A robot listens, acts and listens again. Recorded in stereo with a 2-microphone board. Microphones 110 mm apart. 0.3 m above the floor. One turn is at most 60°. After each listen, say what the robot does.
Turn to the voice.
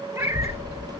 Turn 30° left.
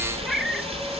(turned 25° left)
Found it: a child speaking, straight ahead, 2 to 4 m away.